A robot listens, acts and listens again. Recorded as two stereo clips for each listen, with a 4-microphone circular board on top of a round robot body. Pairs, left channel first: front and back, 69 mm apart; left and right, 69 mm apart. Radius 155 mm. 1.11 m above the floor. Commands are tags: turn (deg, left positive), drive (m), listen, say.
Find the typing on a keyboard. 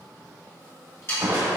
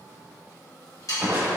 <listen/>
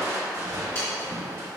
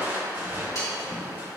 <listen/>
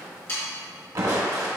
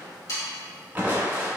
<say>I can't make out typing on a keyboard, only sawing and crushing.</say>